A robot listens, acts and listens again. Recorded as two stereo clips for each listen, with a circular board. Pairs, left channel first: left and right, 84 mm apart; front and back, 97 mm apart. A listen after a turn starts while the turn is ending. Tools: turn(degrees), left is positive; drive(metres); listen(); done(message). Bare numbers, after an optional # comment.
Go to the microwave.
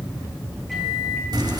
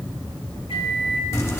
drive(1.0)
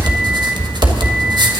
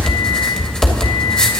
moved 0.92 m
listen()
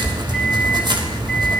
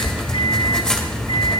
listen()
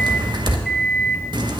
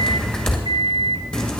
drive(1.0)
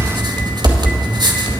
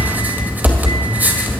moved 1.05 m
listen()
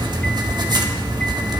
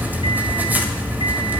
listen()
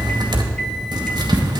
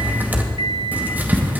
done("I heard a microwave from this way, but can't make it out now. I did not reach it.")